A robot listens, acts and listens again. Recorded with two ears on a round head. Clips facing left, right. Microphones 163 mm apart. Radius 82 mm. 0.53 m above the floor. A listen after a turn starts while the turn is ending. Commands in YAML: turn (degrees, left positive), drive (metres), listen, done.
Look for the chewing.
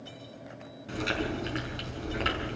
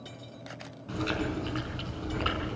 turn: 20
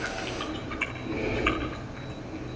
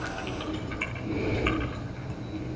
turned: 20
done: "Facing the chewing."